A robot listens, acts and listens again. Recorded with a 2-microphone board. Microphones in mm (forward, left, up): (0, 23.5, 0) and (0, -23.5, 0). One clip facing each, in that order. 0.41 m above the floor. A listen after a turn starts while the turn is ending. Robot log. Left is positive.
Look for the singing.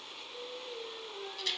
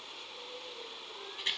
note: The singing: about 70° left or 110° left.
cmd yaw +70
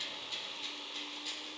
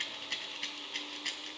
cmd idle
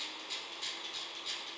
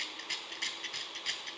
cmd idle
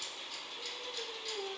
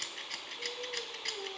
end: Facing the singing.